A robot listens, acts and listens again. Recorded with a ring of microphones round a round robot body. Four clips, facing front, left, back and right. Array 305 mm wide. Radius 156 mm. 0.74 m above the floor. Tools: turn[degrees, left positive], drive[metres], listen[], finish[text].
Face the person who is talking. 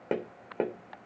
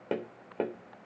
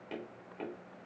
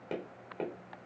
Action: listen[]
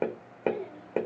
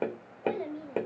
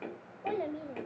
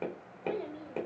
Thought: The child speaking: 165° left.
Action: turn[165]
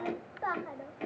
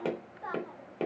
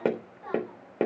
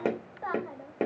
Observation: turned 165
Thought: The child speaking is now 25° right.
Action: turn[-25]
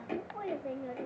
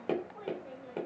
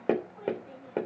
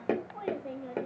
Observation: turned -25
Thought: The child speaking is now 30° right.
Action: turn[-30]
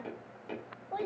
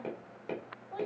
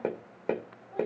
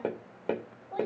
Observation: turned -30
Thought: The child speaking is now 10° right.
Action: turn[-10]
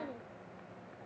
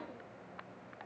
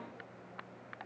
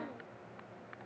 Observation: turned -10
Action: finish[Found it: a child speaking, straight ahead, 2 to 4 m away.]